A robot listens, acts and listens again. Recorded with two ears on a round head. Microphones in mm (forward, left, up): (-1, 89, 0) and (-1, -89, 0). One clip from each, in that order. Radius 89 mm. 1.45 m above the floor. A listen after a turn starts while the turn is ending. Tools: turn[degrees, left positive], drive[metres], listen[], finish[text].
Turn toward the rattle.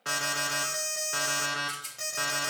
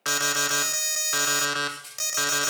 Thought: The rattle: about 25° left or 155° left.
Action: turn[25]
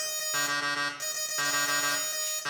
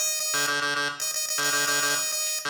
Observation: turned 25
Action: listen[]
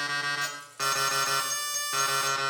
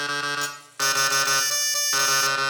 Action: listen[]
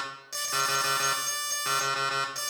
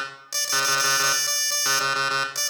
Action: finish[I heard a rattle, but can't make it out now. It was about straight ahead or 130° left.]